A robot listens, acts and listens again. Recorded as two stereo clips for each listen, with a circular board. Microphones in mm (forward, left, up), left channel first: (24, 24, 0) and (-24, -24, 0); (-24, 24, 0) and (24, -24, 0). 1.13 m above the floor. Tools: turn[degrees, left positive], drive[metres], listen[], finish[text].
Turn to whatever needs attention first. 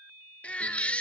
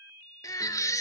Thought: The baby crying: 115° left.
Action: turn[115]
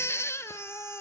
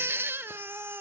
Action: finish[Found it: a baby crying, straight ahead, 1 to 2 m away.]